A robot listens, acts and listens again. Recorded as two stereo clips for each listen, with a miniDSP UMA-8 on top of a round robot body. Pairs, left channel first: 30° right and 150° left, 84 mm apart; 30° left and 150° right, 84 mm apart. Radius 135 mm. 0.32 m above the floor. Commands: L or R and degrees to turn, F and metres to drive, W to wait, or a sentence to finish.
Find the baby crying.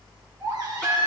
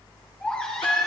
L105
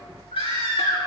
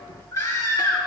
R25
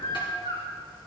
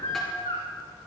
Facing the baby crying, 2 to 4 m away.